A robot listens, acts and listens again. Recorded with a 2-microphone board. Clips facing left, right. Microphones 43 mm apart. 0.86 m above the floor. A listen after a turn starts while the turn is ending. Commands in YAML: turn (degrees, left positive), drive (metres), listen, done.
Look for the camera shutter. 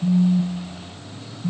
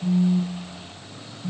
listen: true
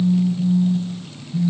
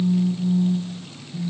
listen: true
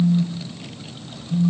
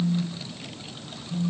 done: "I can't make out a camera shutter to turn to."